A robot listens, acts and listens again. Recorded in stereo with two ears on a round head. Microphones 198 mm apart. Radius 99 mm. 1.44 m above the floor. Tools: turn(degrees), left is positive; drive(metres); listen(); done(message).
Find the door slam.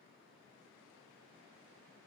listen()
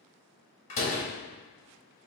turn(degrees=30)
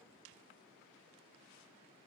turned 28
listen()
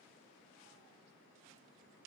done("I heard a door slam, but can't make it out now. It was about 5° left or 120° left.")